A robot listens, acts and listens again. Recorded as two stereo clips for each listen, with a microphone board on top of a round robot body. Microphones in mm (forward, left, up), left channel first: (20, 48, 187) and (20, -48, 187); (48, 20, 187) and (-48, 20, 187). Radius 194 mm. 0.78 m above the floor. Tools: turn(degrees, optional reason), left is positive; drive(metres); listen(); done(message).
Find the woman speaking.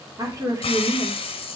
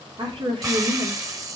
turn(degrees=-150, reason="The woman speaking: 150° right.")
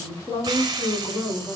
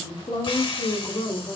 turn(degrees=25, reason="The woman speaking is now 25° left.")
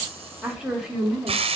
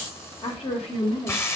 turn(degrees=-10, reason="The woman speaking is now 10° right.")
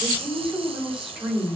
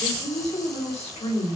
done("Facing the woman speaking, over 4 m away.")